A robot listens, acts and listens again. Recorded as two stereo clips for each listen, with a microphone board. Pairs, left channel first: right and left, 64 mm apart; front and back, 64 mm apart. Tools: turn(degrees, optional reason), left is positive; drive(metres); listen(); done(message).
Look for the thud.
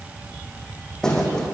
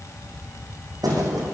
turn(degrees=-170, reason="The thud: 170° right.")
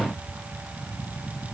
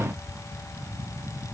done("I heard a thud from this way, but can't make it out now.")